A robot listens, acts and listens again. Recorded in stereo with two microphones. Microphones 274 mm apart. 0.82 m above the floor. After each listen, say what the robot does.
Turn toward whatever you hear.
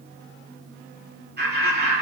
Turn 35° right.
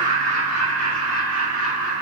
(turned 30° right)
Turn 115° right.
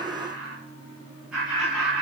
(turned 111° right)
Found it: laughter, straight ahead.